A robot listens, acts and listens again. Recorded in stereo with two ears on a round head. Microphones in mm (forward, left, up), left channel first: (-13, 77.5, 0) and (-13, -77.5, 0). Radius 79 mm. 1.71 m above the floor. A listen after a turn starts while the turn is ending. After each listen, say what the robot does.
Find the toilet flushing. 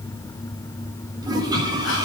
Turn 25° right.
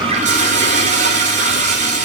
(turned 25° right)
Turn 130° right.
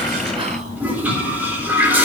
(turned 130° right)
Turn 10° right.
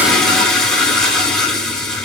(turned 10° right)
Facing the toilet flushing.